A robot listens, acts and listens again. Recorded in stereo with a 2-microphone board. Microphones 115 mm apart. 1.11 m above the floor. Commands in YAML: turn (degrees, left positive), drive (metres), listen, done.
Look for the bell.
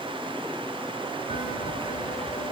turn: 90
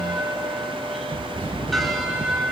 done: "Found it: a bell, straight ahead, 2 to 4 m away."